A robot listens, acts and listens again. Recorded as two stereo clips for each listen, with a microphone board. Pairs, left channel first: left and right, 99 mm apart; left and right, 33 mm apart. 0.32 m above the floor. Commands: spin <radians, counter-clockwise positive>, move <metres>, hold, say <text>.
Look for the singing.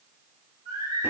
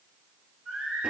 spin -0.79
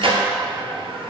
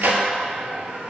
hold
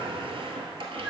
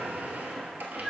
hold
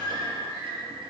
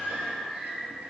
spin -0.70
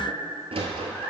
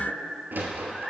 hold
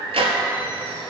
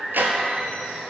spin -0.35
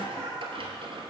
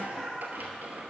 say Facing the singing, 2 to 4 m away.